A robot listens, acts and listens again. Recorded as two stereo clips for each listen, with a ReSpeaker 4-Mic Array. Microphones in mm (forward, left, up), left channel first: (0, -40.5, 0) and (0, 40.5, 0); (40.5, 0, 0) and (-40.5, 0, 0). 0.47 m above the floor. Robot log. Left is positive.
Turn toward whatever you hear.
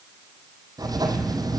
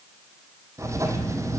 note: The writing: 130° left.
cmd yaw +130
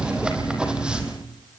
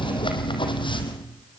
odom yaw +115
note: The writing is now 10° left.
cmd yaw +10
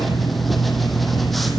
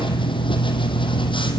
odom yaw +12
end: Facing the writing.